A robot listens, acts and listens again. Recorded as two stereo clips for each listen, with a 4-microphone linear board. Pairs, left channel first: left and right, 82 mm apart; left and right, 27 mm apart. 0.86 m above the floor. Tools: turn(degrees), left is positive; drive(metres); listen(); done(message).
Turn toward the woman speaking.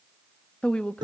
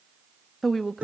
turn(degrees=30)
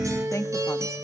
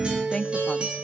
turn(degrees=140)
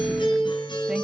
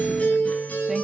listen()
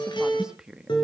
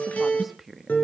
turn(degrees=-10)
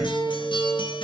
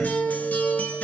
listen()
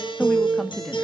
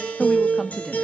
done("Found it: a woman speaking, straight ahead.")